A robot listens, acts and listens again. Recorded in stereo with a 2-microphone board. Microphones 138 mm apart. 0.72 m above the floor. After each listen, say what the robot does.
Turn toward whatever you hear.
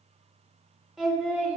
Turn 30° right.
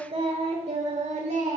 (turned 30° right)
Turn 120° right.
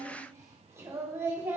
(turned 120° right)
Turn 15° right.
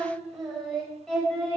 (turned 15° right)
Found it: singing, straight ahead.